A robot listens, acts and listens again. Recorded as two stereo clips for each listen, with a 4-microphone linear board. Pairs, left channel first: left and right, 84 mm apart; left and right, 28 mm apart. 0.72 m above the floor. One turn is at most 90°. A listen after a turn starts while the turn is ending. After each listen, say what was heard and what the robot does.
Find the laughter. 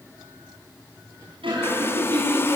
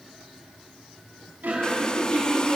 Turn 90° right.
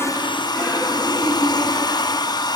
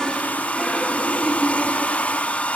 Found it: laughter, straight ahead, over 4 m away.